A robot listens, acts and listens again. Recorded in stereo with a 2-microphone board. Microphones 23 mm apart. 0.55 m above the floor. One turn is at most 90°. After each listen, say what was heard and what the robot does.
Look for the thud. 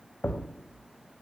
Turn 90° left.
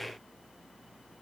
Facing where the thud came from. I can't hear it now.